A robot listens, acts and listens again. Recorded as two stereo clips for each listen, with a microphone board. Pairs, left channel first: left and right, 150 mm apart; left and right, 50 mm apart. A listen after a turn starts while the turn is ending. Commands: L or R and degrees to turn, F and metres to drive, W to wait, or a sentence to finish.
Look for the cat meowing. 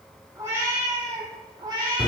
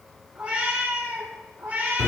R30
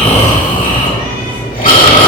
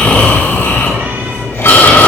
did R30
W
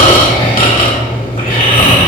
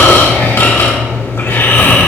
W
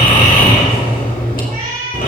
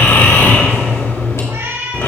R100
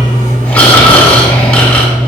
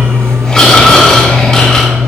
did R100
W
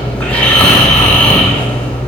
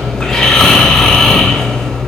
W
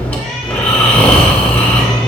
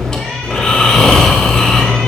Facing where the cat meowing came from. I can't hear it now.